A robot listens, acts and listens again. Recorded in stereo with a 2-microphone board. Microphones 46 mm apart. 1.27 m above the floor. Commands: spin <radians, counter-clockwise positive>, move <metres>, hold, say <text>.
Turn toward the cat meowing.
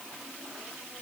hold
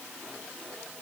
hold
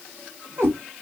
spin -1.13
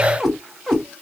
say Facing the cat meowing, 1 to 2 m away.